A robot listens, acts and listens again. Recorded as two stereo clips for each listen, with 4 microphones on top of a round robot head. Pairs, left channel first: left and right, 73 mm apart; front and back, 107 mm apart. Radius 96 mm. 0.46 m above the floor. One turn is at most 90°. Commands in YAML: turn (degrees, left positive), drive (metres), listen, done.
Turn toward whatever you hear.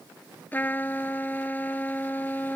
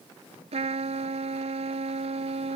turn: 90
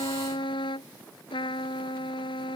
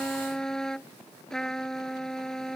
turn: 85
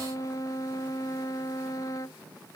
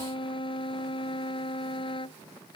turn: 40
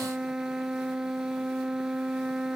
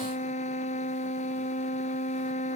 done: "Facing the trumpet."